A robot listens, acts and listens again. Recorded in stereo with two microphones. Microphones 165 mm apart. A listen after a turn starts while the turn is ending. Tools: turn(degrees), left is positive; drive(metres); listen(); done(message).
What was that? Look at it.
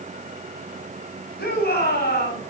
turn(degrees=90)
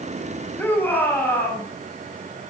turn(degrees=10)
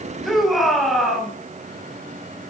done("Found it: a shout, straight ahead, over 4 m away.")